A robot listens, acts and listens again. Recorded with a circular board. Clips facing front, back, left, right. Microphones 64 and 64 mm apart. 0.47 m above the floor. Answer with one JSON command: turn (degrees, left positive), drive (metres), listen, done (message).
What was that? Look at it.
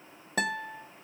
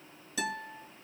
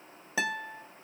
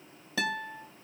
{"turn": 20}
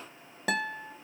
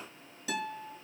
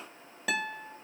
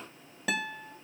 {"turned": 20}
{"done": "Facing the guitar."}